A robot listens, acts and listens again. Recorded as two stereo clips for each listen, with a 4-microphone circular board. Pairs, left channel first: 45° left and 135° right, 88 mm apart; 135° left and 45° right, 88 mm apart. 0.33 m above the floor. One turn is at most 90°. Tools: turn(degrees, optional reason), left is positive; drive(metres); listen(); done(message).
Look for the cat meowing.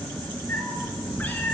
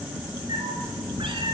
turn(degrees=-30, reason="The cat meowing: 30° right.")
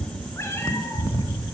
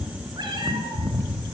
turn(degrees=-30, reason="The cat meowing is now 30° right.")
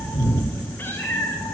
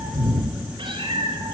turn(degrees=-25, reason="The cat meowing is now 25° right.")
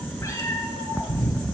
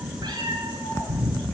turn(degrees=-15, reason="The cat meowing is now 15° right.")
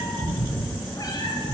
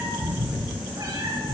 done("Found it: a cat meowing, straight ahead, 2 to 4 m away.")